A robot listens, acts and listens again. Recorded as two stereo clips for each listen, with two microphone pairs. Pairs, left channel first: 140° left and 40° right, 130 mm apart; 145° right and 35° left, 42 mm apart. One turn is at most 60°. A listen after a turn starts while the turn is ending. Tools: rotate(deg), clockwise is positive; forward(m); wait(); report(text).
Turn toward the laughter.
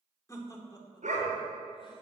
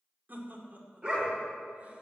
rotate(-60)
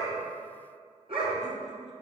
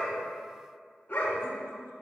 rotate(-25)
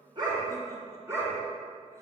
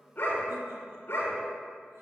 wait()
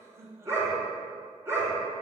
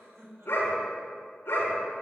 rotate(-30)
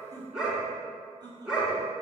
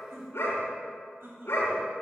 rotate(-20)
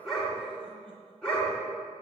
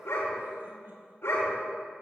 wait()
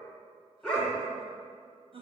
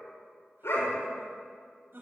report("Found it: laughter, straight ahead, over 4 m away.")